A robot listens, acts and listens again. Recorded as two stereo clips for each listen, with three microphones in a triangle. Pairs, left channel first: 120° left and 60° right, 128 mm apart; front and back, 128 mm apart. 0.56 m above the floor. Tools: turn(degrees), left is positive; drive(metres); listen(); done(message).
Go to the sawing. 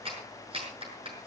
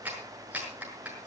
listen()
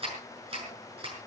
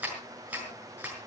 listen()
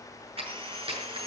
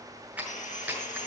turn(degrees=-15)
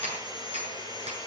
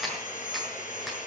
drive(metres=1.0)
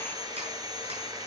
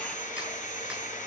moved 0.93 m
drive(metres=1.0)
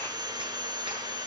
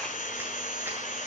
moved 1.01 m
drive(metres=1.0)
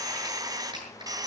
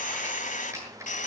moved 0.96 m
drive(metres=1.0)
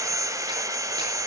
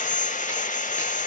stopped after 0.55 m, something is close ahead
done("I am next to the sawing.")